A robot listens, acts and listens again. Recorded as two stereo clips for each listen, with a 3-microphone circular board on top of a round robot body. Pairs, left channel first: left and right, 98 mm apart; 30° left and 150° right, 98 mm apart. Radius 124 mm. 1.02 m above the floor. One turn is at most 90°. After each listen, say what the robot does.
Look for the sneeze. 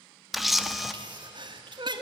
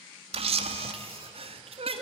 Turn 90° right.
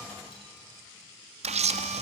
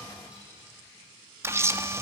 Turn 40° right.
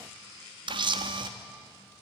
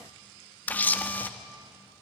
I heard a sneeze from this way, but can't make it out now.